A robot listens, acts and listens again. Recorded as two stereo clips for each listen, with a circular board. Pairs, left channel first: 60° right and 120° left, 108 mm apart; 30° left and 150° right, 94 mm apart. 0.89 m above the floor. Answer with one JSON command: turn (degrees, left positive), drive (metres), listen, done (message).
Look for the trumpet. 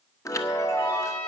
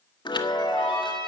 {"turn": -130}
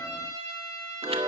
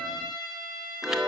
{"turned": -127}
{"done": "Facing the trumpet, over 4 m away."}